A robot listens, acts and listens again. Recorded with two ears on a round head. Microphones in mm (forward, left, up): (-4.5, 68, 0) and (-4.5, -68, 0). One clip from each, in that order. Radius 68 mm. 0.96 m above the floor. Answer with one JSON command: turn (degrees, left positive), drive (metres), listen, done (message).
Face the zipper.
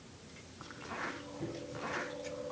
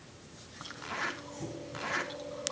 {"turn": -55}
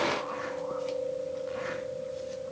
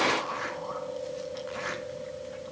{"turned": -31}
{"listen": true}
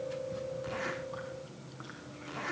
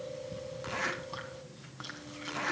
{"turn": -30}
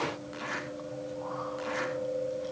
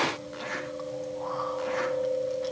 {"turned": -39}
{"turn": 10}
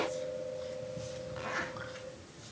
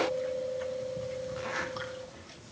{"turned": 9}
{"done": "Found it: a zipper, straight ahead."}